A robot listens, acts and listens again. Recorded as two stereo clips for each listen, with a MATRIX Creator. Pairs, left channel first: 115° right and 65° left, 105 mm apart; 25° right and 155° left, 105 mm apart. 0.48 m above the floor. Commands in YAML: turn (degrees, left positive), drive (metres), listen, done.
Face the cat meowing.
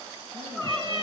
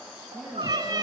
turn: 105
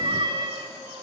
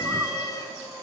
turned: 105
turn: 35
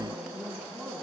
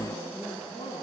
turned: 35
listen: true
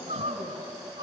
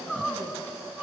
listen: true
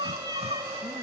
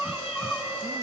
turn: 10
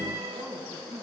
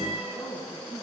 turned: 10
listen: true
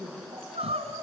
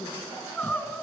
listen: true
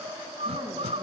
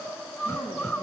done: "Facing where the cat meowing came from. I can't hear it now."